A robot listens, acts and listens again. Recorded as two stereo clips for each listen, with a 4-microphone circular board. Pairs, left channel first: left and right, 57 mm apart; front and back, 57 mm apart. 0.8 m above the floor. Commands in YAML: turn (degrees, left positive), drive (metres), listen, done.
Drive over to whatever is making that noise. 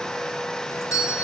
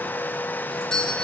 turn: 75
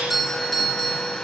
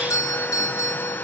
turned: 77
drive: 1.0
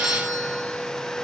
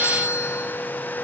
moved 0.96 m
drive: 1.0
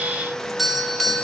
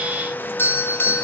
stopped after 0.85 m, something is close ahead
done: "I am next to the doorbell."